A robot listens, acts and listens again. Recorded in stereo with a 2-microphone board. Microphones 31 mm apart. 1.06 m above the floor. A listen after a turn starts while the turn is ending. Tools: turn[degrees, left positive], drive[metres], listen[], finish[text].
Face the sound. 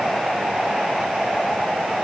Action: listen[]
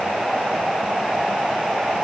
Action: listen[]
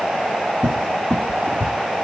Thought: The cupboard door: about 25° left or 155° left.
Action: turn[25]
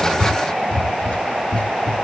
Thought: So it is at 135° left.
Action: turn[135]
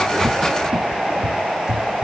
Thought: The cupboard door is now 30° right.
Action: turn[-30]
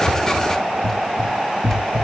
Thought: The cupboard door is now 10° left.
Action: turn[10]
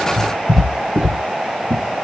Action: finish[Found it: a cupboard door, straight ahead.]